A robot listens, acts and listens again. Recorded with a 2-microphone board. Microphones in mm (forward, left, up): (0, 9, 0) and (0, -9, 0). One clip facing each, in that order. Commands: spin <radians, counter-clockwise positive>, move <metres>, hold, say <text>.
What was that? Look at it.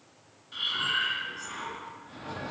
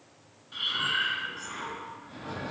spin 0.52
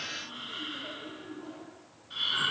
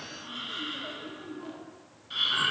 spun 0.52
spin -0.52
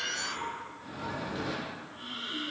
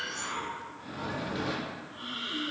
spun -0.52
spin -0.26
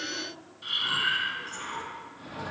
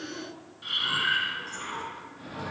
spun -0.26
say Facing the breathing.